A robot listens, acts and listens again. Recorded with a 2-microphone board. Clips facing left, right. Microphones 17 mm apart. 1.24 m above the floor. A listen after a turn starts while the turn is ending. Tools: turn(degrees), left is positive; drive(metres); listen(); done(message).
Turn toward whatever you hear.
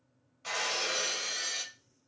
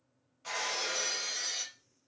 turn(degrees=20)
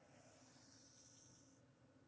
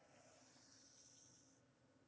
listen()
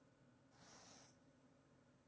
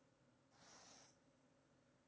done("I heard breaking glass, but can't make it out now. It was about straight ahead or 140° left.")